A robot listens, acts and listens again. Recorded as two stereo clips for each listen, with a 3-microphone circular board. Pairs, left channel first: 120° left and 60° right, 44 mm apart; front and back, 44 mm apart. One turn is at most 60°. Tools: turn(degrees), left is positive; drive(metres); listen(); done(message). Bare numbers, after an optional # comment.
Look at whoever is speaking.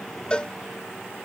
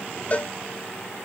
listen()
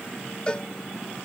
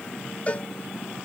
listen()
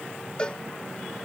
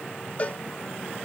done("I can't make out anyone speaking to turn to.")